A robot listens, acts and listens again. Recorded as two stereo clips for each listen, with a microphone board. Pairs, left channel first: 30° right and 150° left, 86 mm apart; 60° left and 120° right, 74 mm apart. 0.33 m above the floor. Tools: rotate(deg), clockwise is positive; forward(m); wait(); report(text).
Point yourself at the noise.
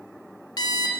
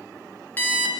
report("Facing the alarm clock.")